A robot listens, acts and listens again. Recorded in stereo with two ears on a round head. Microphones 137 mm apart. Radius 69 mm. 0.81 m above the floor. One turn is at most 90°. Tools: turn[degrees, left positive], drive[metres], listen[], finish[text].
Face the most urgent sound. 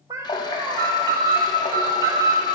Thought: The alarm: about 25° right or 155° right.
Action: turn[-25]
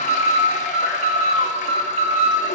Thought: So it is at 125° right.
Action: turn[-90]
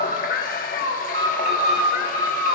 Thought: The alarm is now 60° right.
Action: turn[-60]
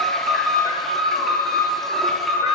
Action: finish[Facing the alarm, 1 to 2 m away.]